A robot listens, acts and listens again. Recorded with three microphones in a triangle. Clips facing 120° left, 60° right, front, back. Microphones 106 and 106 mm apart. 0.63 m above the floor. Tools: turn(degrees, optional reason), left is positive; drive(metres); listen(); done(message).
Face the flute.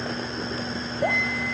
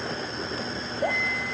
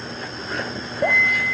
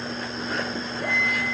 turn(degrees=110, reason="The flute: 110° left.")
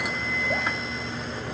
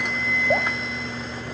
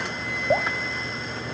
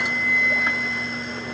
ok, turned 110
turn(degrees=65, reason="The flute is now 65° left.")
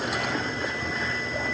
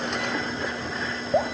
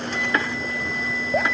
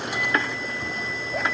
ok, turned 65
listen()
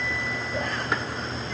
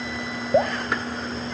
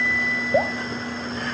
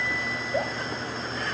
listen()
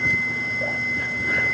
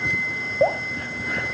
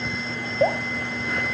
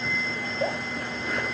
turn(degrees=15, reason="The flute is now 15° left.")
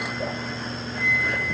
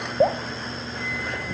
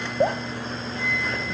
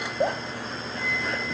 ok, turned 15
done("Facing the flute.")